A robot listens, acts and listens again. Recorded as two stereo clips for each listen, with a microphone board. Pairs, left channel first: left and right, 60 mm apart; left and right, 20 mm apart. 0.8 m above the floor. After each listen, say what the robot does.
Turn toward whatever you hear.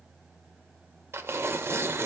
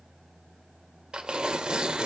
Turn 45° right.
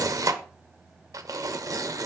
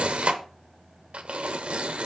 Turn 85° right.
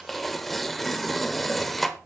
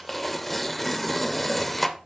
Facing the tearing paper, 1 to 2 m away.